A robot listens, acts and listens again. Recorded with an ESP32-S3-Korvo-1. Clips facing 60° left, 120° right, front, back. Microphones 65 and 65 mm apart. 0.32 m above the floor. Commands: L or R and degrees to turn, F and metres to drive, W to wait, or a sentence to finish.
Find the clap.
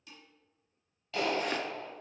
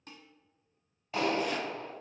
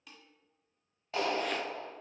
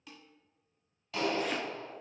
R55
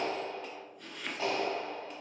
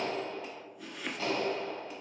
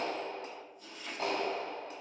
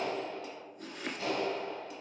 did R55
Found it: a clap, straight ahead, 1 to 2 m away.